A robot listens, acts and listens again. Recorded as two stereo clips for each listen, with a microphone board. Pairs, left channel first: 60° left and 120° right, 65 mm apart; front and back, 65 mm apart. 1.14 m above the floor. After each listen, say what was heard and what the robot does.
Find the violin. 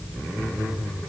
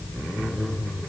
Keep listening.
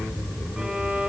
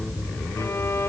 The violin: 40° right. Turn 40° right.
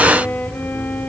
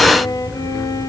Found it: a violin, straight ahead, 2 to 4 m away.